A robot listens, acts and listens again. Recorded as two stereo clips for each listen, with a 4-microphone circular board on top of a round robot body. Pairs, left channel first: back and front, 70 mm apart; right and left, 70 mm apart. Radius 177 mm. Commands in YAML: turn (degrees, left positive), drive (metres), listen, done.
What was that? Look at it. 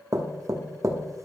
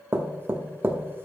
turn: 35
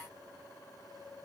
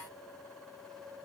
listen: true
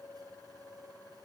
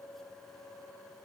listen: true
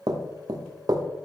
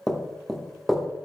done: "Facing the knocking, 1 to 2 m away."